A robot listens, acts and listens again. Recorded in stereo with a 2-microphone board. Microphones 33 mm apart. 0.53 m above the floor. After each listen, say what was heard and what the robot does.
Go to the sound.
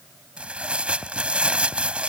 The tearing paper: about 35° right or 145° right. Turn 35° right.
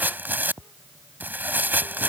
So it is at 110° right. Turn 110° right.
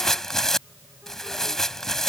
The tearing paper is now 15° left. Turn 15° left.
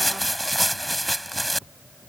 Drive 1.0 m forward.
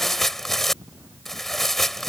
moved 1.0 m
The tearing paper is now 10° left. Turn 10° left.
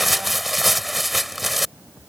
Drive 1.0 m forward.
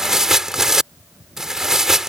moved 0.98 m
The tearing paper is now 15° right. Turn 15° right.
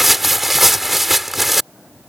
Drive 1.0 m forward.
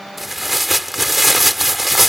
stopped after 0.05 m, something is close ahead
Arrived at the tearing paper, straight ahead.